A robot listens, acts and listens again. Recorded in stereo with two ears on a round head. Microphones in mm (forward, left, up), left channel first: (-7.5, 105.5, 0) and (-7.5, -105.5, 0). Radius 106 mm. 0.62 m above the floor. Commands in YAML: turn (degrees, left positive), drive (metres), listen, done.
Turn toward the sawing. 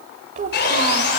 turn: 45
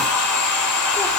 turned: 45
turn: 85
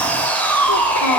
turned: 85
turn: 10
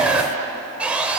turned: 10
done: "Found it: sawing, straight ahead, 2 to 4 m away."